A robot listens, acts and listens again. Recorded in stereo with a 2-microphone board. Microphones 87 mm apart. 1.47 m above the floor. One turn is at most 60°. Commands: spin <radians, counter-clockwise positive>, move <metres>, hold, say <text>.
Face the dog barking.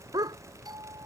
spin -0.87
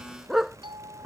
say Facing the dog barking.